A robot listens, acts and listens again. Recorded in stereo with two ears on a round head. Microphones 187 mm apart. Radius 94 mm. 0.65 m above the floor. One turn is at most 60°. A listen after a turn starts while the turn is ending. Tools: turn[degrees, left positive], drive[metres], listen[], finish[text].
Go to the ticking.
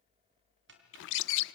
Thought: The ticking: about 55° right or 125° right.
Action: turn[-55]
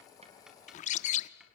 Action: listen[]
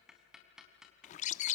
Action: drive[1.0]
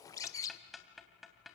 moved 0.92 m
Action: drive[1.0]
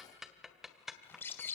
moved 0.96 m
Action: drive[1.0]
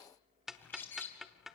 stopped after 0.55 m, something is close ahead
Action: finish[Arrived at the ticking, straight ahead.]